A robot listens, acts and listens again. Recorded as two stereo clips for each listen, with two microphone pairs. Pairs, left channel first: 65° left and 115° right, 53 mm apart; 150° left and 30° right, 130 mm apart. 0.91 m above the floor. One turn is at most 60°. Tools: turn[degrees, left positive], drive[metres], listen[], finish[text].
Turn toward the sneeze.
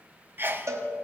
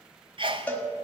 Thought: The sneeze: 70° right.
Action: turn[-60]
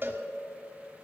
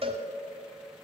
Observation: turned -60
Thought: Nothing new. It was at 10° right.
Action: turn[-10]
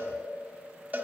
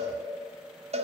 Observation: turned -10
Action: finish[I heard a sneeze from this way, but can't make it out now.]